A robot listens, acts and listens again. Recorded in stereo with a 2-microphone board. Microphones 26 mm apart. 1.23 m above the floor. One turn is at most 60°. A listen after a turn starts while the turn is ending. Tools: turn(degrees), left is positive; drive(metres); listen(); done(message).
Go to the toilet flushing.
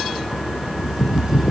listen()
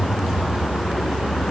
listen()
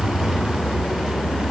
done("I can't make out a toilet flushing to turn to.")